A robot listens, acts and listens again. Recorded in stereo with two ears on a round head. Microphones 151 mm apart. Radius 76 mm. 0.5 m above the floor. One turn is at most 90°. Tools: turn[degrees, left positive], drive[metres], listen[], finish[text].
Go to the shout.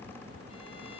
Action: listen[]
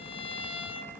Action: listen[]
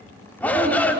Action: turn[30]
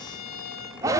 Thought: So it is at 20° right.
Action: turn[-20]
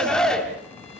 Action: drive[1.0]
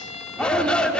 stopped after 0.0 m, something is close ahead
Action: finish[Something is in my way. I am facing the shout but have not reached it.]